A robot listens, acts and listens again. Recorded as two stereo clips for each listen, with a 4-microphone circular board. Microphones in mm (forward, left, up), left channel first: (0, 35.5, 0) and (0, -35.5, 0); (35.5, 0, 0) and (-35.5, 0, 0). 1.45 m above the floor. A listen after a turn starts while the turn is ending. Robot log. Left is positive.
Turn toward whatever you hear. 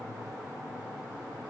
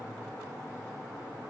cmd idle
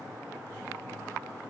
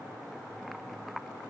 cmd idle
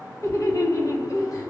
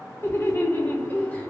note: The laughter: 65° left.
cmd yaw +65
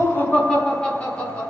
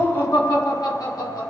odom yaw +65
note: The laughter is now 20° left.
cmd yaw +20
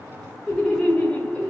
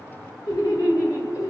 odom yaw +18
note: The laughter is now 15° left.
cmd yaw +15
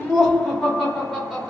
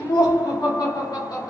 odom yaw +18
end: Facing the laughter.